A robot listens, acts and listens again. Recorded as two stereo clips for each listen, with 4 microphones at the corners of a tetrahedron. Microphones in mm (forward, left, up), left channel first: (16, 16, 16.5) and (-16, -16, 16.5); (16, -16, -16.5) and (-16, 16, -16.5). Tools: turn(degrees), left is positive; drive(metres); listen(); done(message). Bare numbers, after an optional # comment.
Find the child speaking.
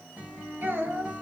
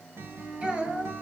# The child speaking: 165° right.
turn(-165)
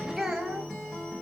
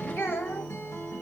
# The child speaking is now 60° right.
turn(-60)
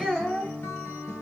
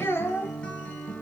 # The child speaking is now 35° right.
turn(-35)
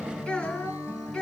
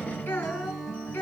# The child speaking is now 15° right.
turn(-15)
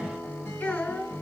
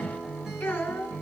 done("Found it: a child speaking, straight ahead.")